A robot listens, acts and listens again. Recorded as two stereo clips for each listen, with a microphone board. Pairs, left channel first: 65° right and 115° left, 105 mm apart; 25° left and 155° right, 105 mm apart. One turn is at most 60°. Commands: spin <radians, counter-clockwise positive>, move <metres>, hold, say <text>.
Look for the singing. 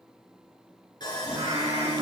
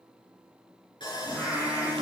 spin 1.05
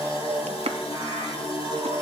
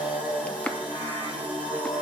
spin 1.05
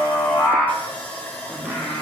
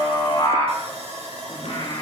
say Facing the singing.